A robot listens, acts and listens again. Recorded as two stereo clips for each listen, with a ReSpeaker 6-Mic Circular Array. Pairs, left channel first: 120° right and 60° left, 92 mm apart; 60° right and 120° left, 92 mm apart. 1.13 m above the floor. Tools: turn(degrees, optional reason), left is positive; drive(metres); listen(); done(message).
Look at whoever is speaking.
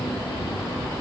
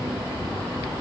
listen()
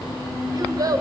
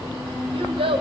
turn(degrees=110, reason="The child speaking: 110° left.")
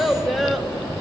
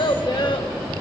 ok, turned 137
turn(degrees=-30, reason="The child speaking is now 30° right.")
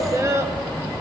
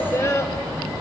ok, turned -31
done("Facing the child speaking.")